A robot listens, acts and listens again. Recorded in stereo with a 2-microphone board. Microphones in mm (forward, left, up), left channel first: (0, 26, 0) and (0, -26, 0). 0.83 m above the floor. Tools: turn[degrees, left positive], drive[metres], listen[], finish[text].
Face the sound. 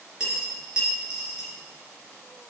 Thought: The dropped coin: about 20° right or 160° right.
Action: turn[-20]
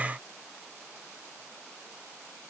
Action: listen[]
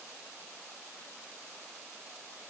Action: finish[I heard a dropped coin, but can't make it out now. It was about straight ahead or 140° right.]